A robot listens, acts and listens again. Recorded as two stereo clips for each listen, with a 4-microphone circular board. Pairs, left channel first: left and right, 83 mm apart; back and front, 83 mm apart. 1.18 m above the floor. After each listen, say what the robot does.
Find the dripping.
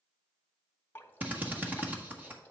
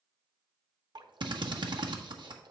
Turn 25° left.
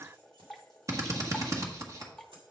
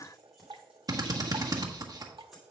Found it: dripping, straight ahead.